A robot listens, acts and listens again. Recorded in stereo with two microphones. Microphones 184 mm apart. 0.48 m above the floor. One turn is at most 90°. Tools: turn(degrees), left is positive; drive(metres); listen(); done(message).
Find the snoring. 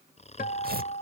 turn(degrees=35)
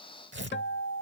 listen()
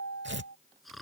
done("Found it: snoring, straight ahead.")